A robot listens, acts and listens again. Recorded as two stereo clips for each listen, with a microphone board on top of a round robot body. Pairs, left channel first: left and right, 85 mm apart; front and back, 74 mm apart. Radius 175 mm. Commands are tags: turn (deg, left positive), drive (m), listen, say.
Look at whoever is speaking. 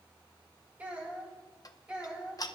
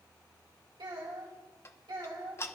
<turn deg="-170"/>
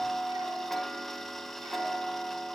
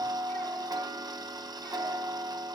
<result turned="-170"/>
<listen/>
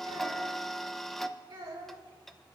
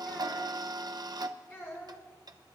<turn deg="-55"/>
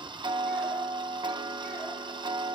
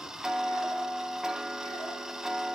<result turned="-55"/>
<listen/>
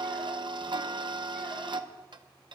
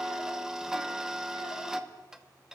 <listen/>
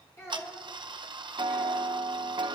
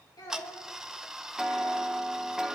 <turn deg="30"/>
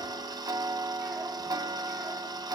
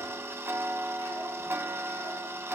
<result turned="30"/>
<listen/>
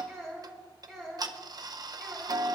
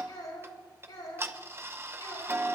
<say>Facing the child speaking, over 4 m away.</say>